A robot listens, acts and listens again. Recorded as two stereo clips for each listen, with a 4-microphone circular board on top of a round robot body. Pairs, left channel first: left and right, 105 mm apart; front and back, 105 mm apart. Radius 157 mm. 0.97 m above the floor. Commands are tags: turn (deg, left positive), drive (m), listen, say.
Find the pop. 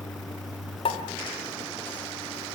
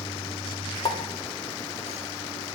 <turn deg="50"/>
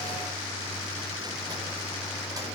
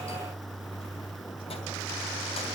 <say>I heard a pop from this way, but can't make it out now.</say>